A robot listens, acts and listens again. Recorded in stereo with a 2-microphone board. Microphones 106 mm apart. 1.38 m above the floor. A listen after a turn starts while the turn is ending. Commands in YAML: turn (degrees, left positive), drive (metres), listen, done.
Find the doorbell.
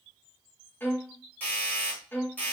turn: 15
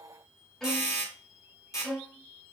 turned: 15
turn: 150
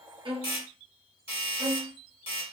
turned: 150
turn: 55
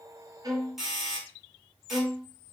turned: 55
done: "Found it: a doorbell, straight ahead, 2 to 4 m away."